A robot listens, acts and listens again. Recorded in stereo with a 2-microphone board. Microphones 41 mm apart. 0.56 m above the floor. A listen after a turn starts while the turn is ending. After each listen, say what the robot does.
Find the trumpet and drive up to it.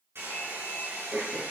Keep listening.
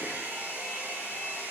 Keep listening.
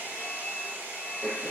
I can't make out a trumpet to turn to.